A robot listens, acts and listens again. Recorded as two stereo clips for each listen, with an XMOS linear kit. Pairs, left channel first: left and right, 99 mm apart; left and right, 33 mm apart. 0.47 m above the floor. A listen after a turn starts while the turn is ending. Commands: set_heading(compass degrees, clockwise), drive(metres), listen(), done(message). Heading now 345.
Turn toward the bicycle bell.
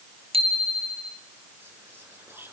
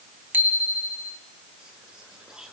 set_heading(75)
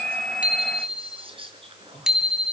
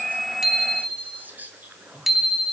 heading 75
done("Found it: a bicycle bell, straight ahead, 2 to 4 m away.")